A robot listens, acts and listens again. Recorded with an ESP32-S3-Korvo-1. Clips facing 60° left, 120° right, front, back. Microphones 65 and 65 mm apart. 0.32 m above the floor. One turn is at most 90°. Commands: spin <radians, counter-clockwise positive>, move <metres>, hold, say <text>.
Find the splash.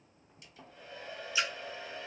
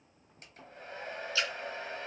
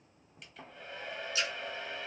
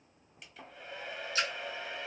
spin 1.57
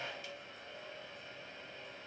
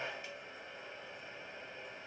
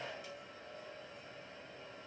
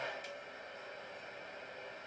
spin 0.79
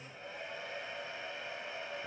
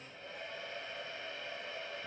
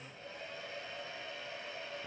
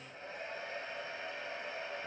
say I heard a splash from this way, but can't make it out now.